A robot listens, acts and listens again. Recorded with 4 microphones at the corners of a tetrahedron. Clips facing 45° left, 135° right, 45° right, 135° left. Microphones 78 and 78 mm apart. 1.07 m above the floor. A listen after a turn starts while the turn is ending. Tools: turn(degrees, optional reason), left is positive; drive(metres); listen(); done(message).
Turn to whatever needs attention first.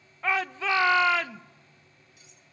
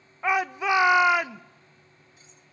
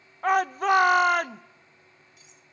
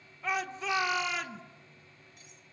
turn(degrees=-65, reason="The shout: 65° right.")
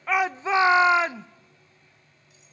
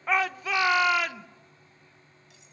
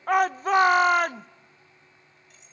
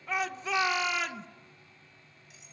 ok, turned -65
turn(degrees=-15, reason="The shout is now 15° right.")
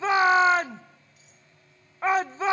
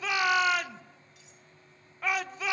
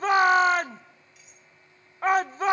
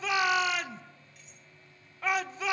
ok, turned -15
done("Found it: a shout, straight ahead, under 1 m away.")